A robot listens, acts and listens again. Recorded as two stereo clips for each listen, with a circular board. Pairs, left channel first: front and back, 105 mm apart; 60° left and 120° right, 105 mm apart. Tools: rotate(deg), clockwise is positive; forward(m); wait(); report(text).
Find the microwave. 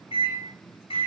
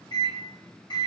rotate(-15)
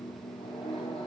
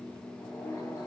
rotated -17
report("Found it: a microwave, straight ahead.")